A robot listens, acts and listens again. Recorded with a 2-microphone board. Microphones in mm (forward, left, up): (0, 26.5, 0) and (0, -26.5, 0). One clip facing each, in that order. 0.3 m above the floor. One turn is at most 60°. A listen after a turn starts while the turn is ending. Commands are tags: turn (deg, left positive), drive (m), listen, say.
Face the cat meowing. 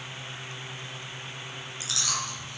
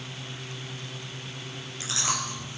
<listen/>
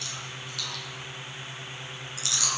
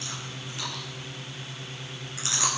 <listen/>
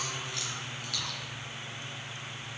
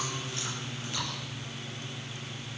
<say>I can't make out a cat meowing to turn to.</say>